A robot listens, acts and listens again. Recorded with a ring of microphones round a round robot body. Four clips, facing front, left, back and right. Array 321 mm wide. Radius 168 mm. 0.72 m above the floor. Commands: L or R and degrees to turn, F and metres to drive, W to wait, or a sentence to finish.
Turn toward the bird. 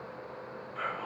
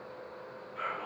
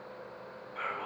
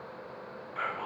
W
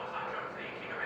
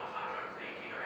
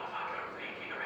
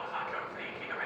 W
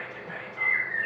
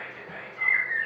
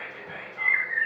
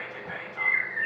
L90
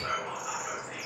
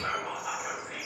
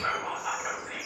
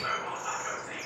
Found it: a bird, straight ahead, 1 to 2 m away.